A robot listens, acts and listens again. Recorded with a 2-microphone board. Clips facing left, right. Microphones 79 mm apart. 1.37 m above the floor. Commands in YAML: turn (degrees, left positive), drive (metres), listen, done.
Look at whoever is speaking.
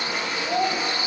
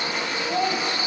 turn: 60
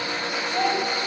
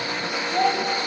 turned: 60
done: "Found it: a child speaking, straight ahead."